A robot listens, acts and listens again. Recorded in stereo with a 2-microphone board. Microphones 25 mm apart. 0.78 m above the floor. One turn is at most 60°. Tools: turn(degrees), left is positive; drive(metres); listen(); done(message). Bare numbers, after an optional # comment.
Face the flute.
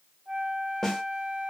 # The flute: about 45° right or 135° right.
turn(-45)
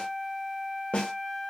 # So it is at 15° right.
turn(-15)
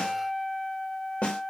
done("Found it: a flute, straight ahead, under 1 m away.")